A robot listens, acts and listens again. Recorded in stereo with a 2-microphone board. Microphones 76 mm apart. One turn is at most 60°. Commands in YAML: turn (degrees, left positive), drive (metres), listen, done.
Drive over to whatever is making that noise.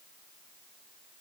listen: true
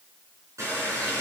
turn: -40
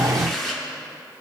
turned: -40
drive: 1.0
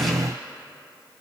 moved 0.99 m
listen: true
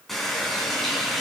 drive: 1.0
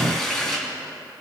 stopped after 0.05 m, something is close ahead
done: "Something is in my way. I am facing the running tap but have not reached it."